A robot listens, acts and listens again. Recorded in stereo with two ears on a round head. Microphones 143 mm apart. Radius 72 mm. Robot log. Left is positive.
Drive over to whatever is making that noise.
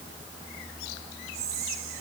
note: The whispering: about 65° right or 115° right.
cmd yaw -65
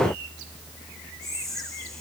cmd fwd 1.0
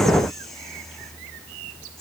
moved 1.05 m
cmd idle
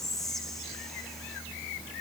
cmd fwd 1.0
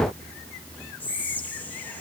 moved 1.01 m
note: The whispering is now 10° left.
cmd yaw +10
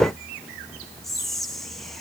cmd fwd 1.0
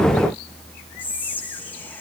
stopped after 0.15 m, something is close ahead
note: The whispering is now 10° left.
cmd yaw +10
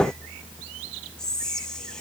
end: I am next to the whispering.